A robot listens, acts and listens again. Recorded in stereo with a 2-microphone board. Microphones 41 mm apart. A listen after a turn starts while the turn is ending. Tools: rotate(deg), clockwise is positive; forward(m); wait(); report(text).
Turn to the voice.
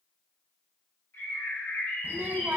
rotate(55)
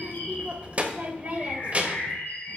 rotate(40)
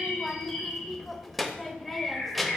report("Found it: a child speaking, straight ahead, under 1 m away.")